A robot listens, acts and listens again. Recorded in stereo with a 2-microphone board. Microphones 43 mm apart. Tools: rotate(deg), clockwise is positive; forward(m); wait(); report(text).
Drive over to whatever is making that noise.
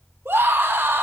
rotate(90)
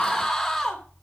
rotate(-15)
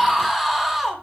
forward(1.0)
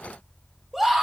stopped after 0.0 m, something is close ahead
report("Something is in my way. I am facing the scream but have not reached it.")